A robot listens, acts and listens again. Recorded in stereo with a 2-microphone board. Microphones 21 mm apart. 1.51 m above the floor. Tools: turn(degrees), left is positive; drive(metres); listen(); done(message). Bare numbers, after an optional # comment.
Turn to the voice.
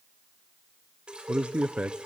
# The man speaking: about 65° right or 115° right.
turn(-65)
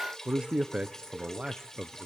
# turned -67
# So it is at 50° right.
turn(-50)
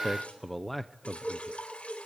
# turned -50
done("Facing the man speaking.")